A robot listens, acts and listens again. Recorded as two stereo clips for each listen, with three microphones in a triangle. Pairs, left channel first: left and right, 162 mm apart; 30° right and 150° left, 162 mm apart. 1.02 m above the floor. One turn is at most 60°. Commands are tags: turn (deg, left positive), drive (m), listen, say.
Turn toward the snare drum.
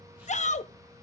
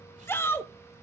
<listen/>
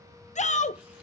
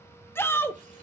<listen/>
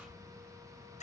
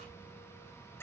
<say>I can't make out a snare drum to turn to.</say>